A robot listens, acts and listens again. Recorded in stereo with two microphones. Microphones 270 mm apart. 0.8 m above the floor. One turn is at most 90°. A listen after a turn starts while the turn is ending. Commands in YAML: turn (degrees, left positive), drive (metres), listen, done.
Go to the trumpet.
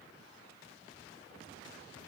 listen: true
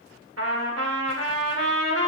turn: -65
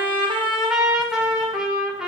drive: 1.0
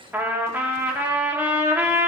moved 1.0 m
drive: 1.0
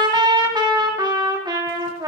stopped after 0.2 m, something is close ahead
turn: -15
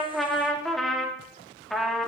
done: "Arrived at the trumpet, straight ahead."